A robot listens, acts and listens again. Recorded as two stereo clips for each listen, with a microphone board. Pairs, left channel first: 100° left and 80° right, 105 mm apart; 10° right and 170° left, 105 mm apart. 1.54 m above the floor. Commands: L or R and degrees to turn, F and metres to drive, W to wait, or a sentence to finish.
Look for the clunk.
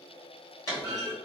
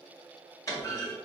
L45
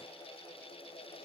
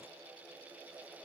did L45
I heard a clunk from this way, but can't make it out now.